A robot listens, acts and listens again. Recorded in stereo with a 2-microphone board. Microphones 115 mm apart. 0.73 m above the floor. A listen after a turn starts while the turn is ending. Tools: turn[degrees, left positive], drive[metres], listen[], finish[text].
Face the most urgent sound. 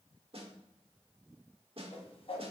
Action: listen[]
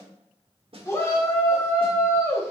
Thought: The shout: about 25° left or 155° left.
Action: turn[25]
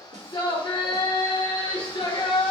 Thought: So it is at 130° left.
Action: turn[130]
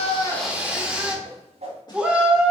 Thought: The shout is now 10° right.
Action: turn[-10]
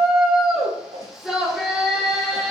Action: finish[Facing the shout.]